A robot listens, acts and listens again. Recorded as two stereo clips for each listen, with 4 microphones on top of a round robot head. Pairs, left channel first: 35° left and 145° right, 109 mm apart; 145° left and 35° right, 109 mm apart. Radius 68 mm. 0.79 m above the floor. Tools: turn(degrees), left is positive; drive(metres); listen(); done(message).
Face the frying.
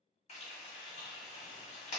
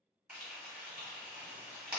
turn(degrees=45)
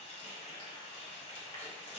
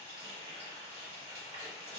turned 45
done("Found it: frying, straight ahead.")